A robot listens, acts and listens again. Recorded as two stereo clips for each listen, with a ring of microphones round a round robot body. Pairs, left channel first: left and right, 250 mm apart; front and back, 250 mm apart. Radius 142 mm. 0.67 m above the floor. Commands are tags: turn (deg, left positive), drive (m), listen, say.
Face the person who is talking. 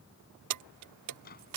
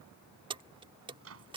<listen/>
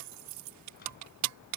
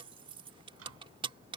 <listen/>
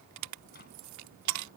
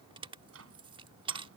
<say>I can't make out anyone speaking, only keys jangling and a microwave.</say>